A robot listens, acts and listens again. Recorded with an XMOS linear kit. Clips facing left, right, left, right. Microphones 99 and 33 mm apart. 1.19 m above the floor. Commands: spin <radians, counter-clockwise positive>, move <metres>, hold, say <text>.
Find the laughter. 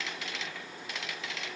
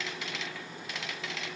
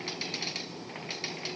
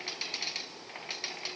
hold
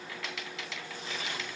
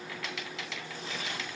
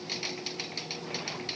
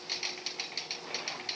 hold
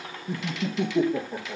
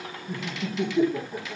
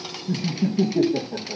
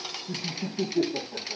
spin 0.87
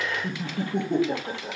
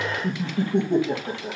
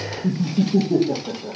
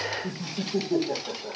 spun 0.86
say Facing the laughter.